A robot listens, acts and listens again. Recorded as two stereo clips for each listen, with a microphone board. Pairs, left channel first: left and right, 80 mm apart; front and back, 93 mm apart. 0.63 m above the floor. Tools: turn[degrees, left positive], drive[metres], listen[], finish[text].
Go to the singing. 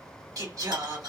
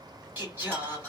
Thought: The singing: 110° right.
Action: turn[-110]
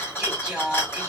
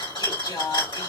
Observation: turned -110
Thought: The singing is now 10° right.
Action: turn[-10]
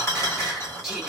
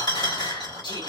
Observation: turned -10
Action: drive[1.0]
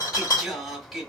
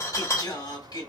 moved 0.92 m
Action: drive[1.0]
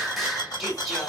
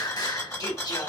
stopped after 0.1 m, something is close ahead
Action: finish[I am next to the singing.]